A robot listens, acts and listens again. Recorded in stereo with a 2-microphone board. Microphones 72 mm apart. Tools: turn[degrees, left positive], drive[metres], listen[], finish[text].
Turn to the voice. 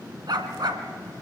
Action: listen[]
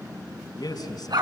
Thought: The man speaking: about 75° left or 105° left.
Action: turn[75]
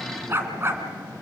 Action: listen[]
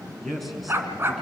Action: finish[Facing the man speaking, over 4 m away.]